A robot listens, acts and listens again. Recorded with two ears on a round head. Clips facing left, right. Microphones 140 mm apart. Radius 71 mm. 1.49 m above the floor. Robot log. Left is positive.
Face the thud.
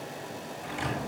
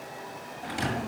note: The thud: about 50° right or 130° right.
cmd yaw -50
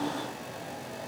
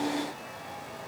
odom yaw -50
cmd idle
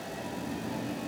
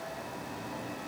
end: I heard a thud, but can't make it out now. It was about straight ahead or 80° right.